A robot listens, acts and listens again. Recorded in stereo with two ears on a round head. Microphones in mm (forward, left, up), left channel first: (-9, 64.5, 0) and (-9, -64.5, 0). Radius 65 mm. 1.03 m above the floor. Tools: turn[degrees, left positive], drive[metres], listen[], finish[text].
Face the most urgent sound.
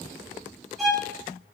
Action: listen[]
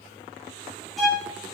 Action: listen[]
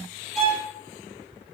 Action: finish[I can't make out anything urgent, only a violin.]